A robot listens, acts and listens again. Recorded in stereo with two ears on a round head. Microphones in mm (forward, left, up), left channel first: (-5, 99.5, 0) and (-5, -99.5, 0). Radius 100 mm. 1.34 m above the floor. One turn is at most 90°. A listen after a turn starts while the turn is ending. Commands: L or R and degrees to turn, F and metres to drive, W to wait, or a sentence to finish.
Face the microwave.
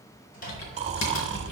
L40
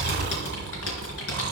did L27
W
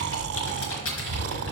W
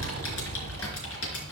I heard a microwave, but can't make it out now. It was about 10° left or 115° left.